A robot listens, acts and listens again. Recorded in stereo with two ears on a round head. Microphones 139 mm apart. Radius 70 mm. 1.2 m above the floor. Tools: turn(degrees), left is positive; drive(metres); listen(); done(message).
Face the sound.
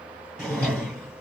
turn(degrees=30)
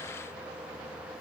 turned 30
listen()
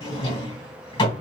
turn(degrees=145)
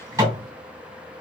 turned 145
turn(degrees=-20)
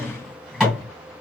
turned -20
done("Found it: a drawer, straight ahead, 2 to 4 m away.")